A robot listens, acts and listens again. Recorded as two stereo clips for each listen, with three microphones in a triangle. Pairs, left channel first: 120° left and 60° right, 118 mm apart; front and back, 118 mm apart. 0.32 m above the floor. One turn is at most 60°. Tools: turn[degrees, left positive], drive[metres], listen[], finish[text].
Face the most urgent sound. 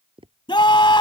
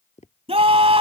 Thought: The scream: 160° left.
Action: turn[60]
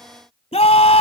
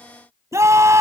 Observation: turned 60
Thought: The scream is now 120° left.
Action: turn[60]
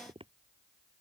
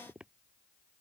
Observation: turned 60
Thought: Nothing new. It was at 60° left.
Action: turn[60]
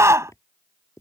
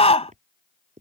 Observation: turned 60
Action: finish[Found it: a scream, straight ahead.]